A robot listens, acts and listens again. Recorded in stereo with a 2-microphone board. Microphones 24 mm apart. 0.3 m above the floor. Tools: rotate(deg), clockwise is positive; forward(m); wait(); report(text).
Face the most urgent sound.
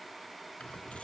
wait()
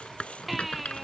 rotate(-30)
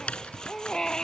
rotate(-150)
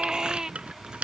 rotate(30)
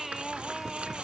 rotate(10)
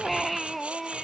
report("Facing the baby crying.")